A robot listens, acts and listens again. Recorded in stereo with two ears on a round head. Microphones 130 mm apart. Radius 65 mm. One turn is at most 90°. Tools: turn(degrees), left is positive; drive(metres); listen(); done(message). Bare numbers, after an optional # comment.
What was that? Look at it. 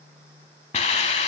# The hiss: about 45° left or 135° left.
turn(45)
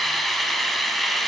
done("Found it: a hiss, straight ahead, 1 to 2 m away.")